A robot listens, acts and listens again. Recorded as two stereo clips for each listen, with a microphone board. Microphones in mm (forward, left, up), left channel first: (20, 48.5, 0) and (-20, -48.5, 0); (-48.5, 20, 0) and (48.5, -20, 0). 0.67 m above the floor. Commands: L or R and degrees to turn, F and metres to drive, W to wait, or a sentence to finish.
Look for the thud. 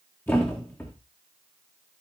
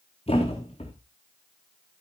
L135
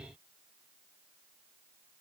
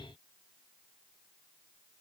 I heard a thud from this way, but can't make it out now.